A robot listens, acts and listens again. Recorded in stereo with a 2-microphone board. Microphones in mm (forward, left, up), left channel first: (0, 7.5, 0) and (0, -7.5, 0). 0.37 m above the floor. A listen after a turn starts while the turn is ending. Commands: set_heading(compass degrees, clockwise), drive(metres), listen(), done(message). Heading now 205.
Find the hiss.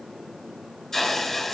set_heading(170)
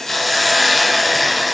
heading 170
done("Found it: a hiss, straight ahead.")